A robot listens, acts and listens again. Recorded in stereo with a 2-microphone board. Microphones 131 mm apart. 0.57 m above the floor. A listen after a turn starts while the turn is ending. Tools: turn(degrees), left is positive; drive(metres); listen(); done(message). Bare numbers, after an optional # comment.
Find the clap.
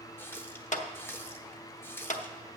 # The clap: about 60° left or 120° left.
turn(60)
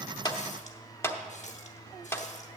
# So it is at 20° left.
turn(20)
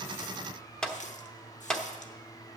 done("Facing the clap, under 1 m away.")